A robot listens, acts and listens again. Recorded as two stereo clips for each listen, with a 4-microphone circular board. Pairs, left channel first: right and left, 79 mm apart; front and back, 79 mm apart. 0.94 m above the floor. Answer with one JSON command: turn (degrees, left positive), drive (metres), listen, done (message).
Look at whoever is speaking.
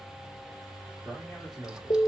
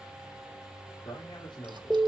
{"done": "Facing the man speaking."}